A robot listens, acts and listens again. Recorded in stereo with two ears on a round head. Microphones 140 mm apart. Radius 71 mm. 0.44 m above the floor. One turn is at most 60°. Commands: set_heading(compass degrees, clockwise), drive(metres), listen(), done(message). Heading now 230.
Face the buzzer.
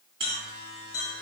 set_heading(265)
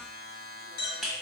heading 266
done("Found it: a buzzer, straight ahead, 1 to 2 m away.")